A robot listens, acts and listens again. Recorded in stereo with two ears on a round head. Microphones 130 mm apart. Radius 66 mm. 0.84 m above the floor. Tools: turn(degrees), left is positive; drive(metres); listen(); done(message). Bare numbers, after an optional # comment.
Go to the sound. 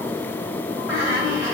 turn(30)
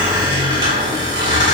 # So it is at 30° right.
turn(-30)
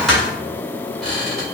drive(1.0)
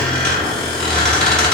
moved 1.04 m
drive(1.0)
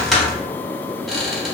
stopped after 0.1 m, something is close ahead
done("Arrived at the squeak, straight ahead.")